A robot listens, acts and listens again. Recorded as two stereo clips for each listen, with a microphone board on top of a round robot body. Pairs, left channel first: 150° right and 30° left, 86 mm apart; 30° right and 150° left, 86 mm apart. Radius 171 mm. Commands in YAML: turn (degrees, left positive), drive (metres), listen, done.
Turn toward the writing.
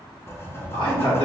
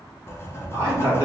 turn: -90
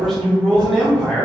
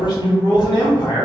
listen: true
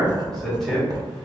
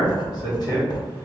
done: "Facing the writing."